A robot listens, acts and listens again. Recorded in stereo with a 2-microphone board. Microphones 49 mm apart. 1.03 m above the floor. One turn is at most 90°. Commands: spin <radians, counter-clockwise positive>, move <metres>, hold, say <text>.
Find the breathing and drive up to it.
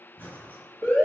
spin 0.79
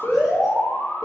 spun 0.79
hold
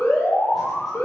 hold
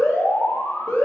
say I heard breathing, but can't make it out now. It was about straight ahead or 90° left. I did not reach it.